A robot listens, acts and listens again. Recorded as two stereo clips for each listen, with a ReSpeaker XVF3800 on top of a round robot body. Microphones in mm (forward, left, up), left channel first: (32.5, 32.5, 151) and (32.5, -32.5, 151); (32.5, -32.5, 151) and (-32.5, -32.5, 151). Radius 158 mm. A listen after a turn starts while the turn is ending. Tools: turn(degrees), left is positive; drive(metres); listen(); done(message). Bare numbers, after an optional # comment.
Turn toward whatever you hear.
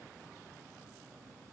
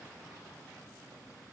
listen()
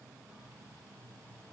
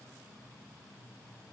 listen()
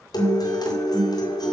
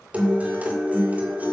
# The guitar: 110° left.
turn(110)
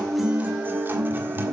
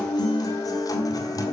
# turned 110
# The guitar is now 30° right.
turn(-30)
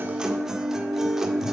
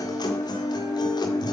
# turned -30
done("Facing the guitar, 1 to 2 m away.")